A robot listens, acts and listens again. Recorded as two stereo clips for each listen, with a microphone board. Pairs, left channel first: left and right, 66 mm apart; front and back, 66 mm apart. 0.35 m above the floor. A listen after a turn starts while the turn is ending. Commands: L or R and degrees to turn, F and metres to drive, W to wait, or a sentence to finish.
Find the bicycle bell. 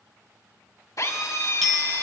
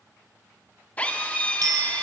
L175
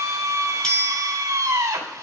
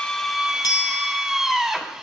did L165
L10
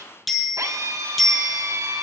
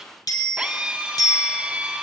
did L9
Facing the bicycle bell.